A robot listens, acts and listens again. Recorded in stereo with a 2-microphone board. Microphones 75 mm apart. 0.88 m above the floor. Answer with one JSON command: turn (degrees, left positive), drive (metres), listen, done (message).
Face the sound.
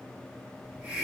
{"turn": -25}
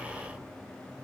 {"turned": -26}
{"listen": true}
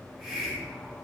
{"done": "Found it: a hiss, straight ahead."}